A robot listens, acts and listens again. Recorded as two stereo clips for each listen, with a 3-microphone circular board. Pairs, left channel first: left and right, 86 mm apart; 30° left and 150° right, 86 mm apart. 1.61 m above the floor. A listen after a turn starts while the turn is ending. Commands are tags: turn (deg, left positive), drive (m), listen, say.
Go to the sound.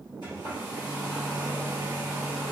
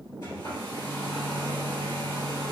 <turn deg="65"/>
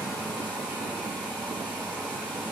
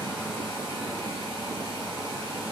<turn deg="20"/>
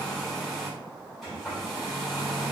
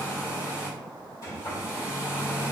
<drive m="1.0"/>
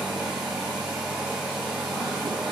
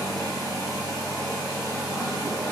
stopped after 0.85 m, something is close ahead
<say>Arrived at the hair dryer, straight ahead.</say>